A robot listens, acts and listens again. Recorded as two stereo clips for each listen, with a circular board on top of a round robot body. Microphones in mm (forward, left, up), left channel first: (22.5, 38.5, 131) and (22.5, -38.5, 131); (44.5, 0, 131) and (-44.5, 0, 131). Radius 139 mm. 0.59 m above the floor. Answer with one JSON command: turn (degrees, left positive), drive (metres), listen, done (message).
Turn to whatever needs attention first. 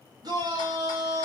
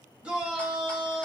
{"turn": -100}
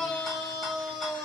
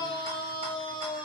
{"done": "Found it: a shout, straight ahead."}